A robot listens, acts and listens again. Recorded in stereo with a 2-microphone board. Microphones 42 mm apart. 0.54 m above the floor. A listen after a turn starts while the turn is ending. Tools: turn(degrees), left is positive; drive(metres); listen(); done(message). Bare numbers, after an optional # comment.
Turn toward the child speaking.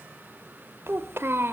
# The child speaking: about 65° right or 115° right.
turn(-65)
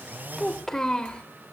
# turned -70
# So it is at 20° left.
turn(20)
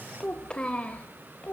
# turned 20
# The child speaking is now 30° left.
turn(30)
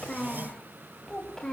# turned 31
# The child speaking is now 15° left.
turn(15)
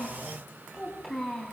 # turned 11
done("Found it: a child speaking, straight ahead.")